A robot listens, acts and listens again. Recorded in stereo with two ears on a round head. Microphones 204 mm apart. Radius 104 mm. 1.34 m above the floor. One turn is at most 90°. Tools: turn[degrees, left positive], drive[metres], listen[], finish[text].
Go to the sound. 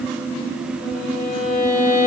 Thought: The violin: about 50° left or 130° left.
Action: turn[50]
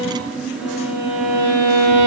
Action: drive[1.0]
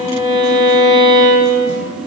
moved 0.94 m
Action: drive[1.0]
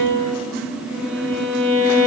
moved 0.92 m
Thought: The violin is now 10° right.
Action: turn[-10]
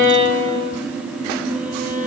Action: drive[1.0]
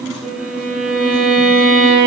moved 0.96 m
Action: drive[1.0]
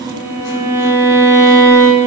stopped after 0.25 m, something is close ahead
Thought: The violin is now 10° right.
Action: turn[-10]
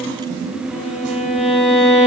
Action: finish[I am next to the violin.]